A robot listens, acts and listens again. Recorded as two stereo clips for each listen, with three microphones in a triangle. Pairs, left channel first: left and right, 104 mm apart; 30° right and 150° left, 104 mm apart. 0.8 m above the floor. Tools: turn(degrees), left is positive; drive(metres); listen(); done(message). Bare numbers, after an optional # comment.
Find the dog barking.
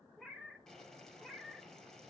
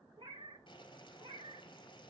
listen()
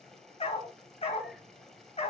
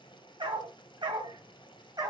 # The dog barking: 100° left.
turn(100)
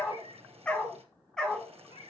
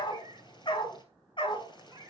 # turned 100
done("Facing the dog barking.")